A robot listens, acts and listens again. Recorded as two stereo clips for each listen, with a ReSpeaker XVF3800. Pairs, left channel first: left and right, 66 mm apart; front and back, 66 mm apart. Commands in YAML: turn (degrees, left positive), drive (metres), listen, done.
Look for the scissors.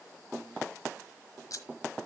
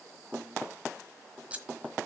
turn: 110
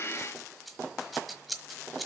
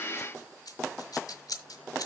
done: "Facing the scissors."